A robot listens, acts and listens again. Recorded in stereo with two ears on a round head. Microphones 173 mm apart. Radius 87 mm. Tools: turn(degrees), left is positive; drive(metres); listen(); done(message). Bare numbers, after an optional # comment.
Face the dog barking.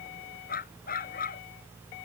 # The dog barking: about 50° left or 130° left.
turn(50)
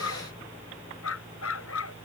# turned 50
# So it is at 80° left.
turn(80)
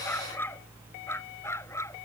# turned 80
# The dog barking is now 15° left.
turn(15)
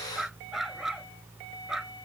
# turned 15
done("Found it: a dog barking, straight ahead.")